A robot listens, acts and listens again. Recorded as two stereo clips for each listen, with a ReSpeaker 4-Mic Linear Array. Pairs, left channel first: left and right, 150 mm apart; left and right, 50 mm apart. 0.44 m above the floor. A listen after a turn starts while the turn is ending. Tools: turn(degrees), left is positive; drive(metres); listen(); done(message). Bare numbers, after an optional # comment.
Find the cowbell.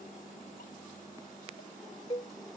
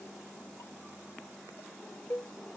# The cowbell: about 40° left or 140° left.
turn(40)
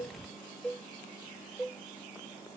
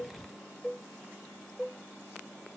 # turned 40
done("Found it: a cowbell, straight ahead.")